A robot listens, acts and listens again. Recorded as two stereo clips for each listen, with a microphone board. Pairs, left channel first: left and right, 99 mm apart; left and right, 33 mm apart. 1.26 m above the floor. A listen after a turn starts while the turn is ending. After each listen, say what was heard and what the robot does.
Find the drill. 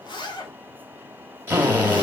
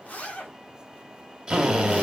The drill: about 20° right or 160° right. Turn 20° right.
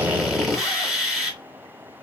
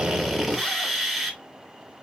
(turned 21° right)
Facing the drill, 1 to 2 m away.